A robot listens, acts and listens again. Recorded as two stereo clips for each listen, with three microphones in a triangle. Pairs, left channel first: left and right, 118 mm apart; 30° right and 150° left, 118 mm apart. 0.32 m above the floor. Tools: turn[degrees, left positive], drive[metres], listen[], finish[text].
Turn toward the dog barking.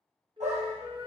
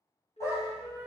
Thought: The dog barking: 95° right.
Action: turn[-95]
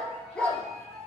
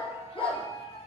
Thought: The dog barking is now 10° left.
Action: turn[10]
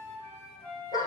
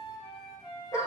Thought: The dog barking is now 35° left.
Action: turn[35]
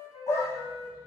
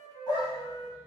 Thought: The dog barking is now 25° left.
Action: turn[25]
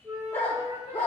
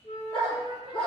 Thought: The dog barking is now 20° left.
Action: turn[20]
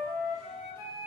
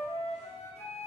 Action: listen[]
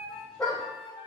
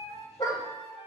Thought: The dog barking is now 10° left.
Action: turn[10]
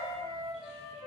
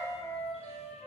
Action: listen[]
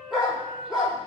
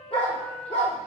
Action: finish[Facing the dog barking.]